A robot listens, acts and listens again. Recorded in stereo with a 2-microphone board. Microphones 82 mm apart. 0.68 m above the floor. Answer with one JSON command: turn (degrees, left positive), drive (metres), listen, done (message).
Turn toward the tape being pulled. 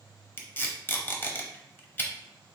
{"turn": 25}
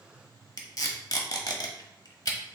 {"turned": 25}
{"turn": 125}
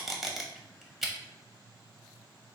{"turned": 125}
{"done": "Found it: tape being pulled, straight ahead, under 1 m away."}